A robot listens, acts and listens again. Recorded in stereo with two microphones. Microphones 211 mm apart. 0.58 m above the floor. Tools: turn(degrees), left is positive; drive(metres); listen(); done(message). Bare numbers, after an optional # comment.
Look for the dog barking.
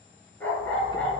turn(30)
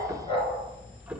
# So it is at 155° left.
turn(155)
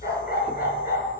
# The dog barking is now 45° left.
turn(45)
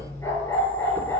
# The dog barking is now 10° left.
turn(10)
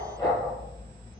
done("Found it: a dog barking, straight ahead, 2 to 4 m away.")